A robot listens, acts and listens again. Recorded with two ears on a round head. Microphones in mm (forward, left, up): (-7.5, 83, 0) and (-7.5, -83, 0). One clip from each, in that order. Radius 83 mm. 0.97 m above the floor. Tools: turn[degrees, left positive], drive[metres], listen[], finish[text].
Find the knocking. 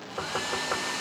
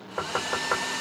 Thought: The knocking: about 45° right or 135° right.
Action: turn[-45]
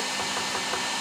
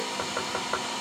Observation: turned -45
Action: listen[]
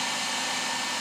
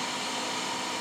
Action: listen[]
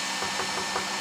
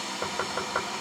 Action: finish[I heard knocking, but can't make it out now. It was about straight ahead or 90° right.]